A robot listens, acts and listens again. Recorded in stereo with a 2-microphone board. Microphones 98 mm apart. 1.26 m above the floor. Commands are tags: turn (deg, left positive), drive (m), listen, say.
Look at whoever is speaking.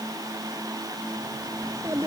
<turn deg="-30"/>
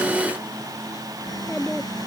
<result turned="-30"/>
<say>Facing the child speaking.</say>